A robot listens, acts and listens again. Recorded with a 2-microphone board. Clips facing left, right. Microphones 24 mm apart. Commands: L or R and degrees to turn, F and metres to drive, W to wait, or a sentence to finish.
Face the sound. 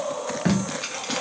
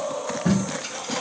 L60
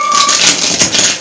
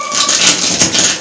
L20
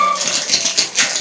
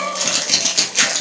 Facing the tape being pulled, under 1 m away.